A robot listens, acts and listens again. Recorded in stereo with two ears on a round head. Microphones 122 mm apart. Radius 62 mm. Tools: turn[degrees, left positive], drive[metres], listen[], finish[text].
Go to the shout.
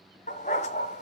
Action: listen[]
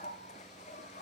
Action: listen[]
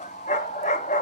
Action: finish[I can't make out a shout, only a dog barking.]